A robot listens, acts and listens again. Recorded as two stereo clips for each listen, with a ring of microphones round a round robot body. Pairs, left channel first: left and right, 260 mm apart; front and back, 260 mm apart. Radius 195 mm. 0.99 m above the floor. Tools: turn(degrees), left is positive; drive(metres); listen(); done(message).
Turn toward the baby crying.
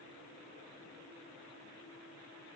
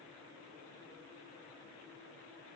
listen()
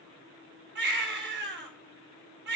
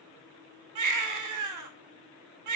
turn(degrees=-150)
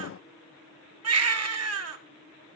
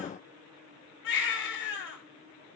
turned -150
turn(degrees=-60)
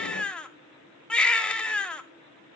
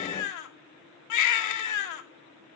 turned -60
done("Found it: a baby crying, straight ahead.")